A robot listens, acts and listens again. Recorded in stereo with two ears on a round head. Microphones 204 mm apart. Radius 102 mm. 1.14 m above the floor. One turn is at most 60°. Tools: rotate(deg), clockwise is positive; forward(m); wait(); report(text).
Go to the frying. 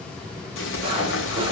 rotate(-60)
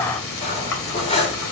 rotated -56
rotate(-60)
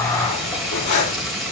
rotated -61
forward(1.0)
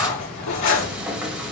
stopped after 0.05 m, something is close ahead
report("Something is in my way. I am facing the frying but have not reached it.")